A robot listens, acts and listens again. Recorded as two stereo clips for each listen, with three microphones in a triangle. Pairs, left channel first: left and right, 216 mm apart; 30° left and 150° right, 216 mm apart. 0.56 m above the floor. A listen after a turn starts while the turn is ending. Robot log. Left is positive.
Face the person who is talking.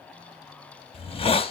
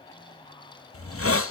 cmd idle
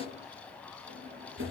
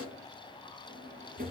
cmd idle
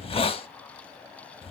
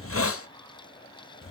end: I can't make out anyone speaking, only a drawer and a hiss.